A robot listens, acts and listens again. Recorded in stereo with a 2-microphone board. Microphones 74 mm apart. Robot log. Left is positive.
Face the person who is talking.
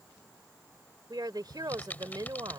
note: The woman speaking: about 70° right or 110° right.
cmd yaw -70
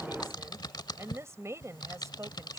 note: So it is at 45° right.
cmd yaw -45
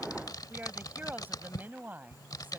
note: The woman speaking is now 25° right.
cmd yaw -25
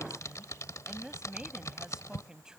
note: The woman speaking is now 10° right.
cmd yaw -10
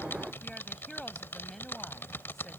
cmd idle
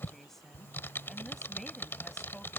end: Facing the woman speaking.